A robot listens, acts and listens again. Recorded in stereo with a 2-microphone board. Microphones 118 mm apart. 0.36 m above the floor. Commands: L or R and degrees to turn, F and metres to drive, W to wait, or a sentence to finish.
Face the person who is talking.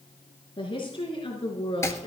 L45
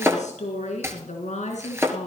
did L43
L105
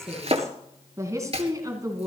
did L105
R30
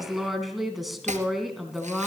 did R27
Facing the woman speaking.